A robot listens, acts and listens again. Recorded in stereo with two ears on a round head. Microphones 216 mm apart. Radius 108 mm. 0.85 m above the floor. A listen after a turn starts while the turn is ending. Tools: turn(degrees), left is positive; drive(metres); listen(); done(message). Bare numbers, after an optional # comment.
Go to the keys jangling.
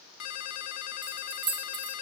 # The keys jangling: about 20° right or 160° right.
turn(-20)
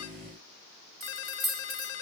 drive(1.0)
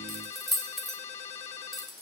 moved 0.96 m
drive(1.0)
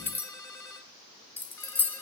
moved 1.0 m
# The keys jangling is now 10° left.
turn(10)
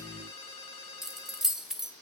drive(1.0)
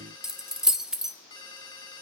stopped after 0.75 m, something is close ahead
done("Arrived at the keys jangling, straight ahead.")